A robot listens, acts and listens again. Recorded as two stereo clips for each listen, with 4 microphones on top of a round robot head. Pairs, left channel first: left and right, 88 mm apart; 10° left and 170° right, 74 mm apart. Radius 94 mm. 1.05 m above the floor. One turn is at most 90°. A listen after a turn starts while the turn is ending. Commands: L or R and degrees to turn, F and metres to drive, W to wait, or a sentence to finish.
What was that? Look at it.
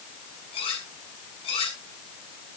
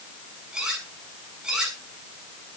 L90
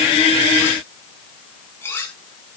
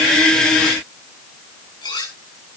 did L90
L30
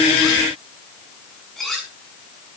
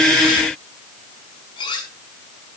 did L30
Found it: cutlery clinking, straight ahead.